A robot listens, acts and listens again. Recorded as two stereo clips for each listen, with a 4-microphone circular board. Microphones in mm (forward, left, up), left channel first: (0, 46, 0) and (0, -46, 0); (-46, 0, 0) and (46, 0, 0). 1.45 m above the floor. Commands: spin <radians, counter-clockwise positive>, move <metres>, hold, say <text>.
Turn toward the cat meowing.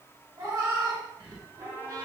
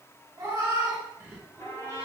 spin -0.96
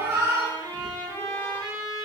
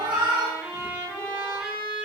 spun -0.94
spin -0.70
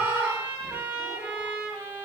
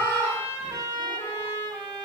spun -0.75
spin -0.52
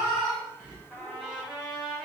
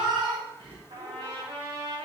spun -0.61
spin -0.26
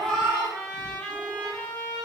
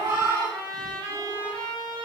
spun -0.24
say Found it: a cat meowing, straight ahead.